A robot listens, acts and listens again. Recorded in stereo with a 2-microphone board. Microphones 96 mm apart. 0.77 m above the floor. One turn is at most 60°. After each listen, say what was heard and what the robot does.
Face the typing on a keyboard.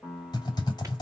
The typing on a keyboard: about 50° left or 130° left. Turn 50° left.
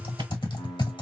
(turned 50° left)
So it is at 70° left. Turn 60° left.
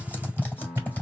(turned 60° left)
The typing on a keyboard is now 20° left. Turn 20° left.
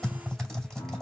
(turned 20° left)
Found it: typing on a keyboard, straight ahead.